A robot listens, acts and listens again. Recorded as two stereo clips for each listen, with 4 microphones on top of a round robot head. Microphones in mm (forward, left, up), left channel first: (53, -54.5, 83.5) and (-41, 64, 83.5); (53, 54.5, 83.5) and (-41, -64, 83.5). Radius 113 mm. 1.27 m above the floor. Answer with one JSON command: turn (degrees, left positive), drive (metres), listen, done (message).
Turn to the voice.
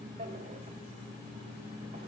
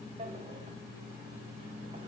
{"listen": true}
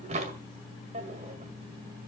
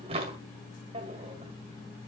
{"listen": true}
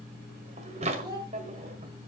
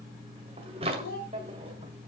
{"turn": 70}
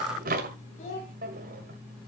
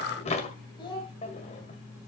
{"turn": -10}
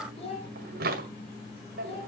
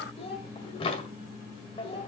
{"done": "Found it: a child speaking, straight ahead, over 4 m away."}